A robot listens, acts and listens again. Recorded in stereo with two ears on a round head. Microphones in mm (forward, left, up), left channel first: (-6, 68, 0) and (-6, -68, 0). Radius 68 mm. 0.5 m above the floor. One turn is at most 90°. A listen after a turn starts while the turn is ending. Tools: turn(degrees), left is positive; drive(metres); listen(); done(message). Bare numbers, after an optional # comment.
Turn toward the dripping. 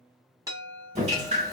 # The dripping: about 45° right or 135° right.
turn(-45)
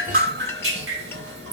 # So it is at 95° right.
turn(-90)
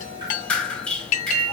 done("Facing the dripping, under 1 m away.")